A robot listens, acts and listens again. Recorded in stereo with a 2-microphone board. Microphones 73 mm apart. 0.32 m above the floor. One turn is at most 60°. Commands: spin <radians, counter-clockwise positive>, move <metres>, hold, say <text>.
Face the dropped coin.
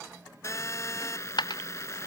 spin 1.05
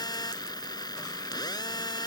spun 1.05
spin 0.52
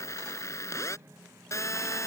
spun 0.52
say Facing where the dropped coin came from. I can't hear it now.